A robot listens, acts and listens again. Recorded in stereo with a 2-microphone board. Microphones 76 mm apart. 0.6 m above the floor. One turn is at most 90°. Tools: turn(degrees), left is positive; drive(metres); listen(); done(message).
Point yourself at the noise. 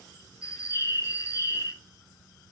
turn(degrees=40)
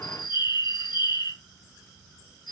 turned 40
turn(degrees=90)
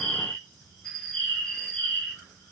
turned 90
turn(degrees=10)
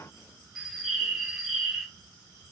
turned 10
done("Facing the bird, 2 to 4 m away.")